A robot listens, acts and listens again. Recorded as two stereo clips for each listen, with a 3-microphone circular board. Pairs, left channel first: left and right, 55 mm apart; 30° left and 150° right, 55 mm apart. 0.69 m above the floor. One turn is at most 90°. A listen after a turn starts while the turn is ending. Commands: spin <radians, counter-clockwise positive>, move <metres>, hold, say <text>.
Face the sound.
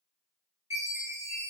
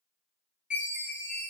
spin -1.48
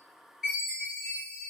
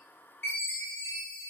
say Facing the chime.